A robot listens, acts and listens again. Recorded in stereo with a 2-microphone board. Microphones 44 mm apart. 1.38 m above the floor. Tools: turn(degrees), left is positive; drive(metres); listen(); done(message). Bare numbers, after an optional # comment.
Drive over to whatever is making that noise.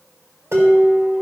turn(-90)
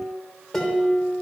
# So it is at 10° left.
turn(10)
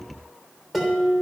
drive(1.0)
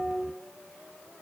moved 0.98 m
drive(1.0)
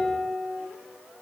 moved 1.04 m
# The dishes clattering is now 10° right.
turn(-10)
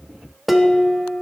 drive(1.0)
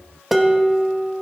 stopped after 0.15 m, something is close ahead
done("I am next to the dishes clattering.")